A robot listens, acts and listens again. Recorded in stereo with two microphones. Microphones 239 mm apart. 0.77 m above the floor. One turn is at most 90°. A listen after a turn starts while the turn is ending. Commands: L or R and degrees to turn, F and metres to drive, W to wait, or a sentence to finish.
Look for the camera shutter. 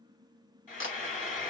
L55
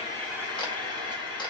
L25
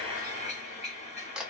Facing the camera shutter, under 1 m away.